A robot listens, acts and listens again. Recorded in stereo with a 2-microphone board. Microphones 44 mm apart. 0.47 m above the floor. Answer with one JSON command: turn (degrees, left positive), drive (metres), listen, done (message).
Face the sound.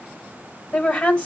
{"turn": 25}
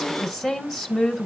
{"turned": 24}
{"done": "Facing the woman speaking, 2 to 4 m away."}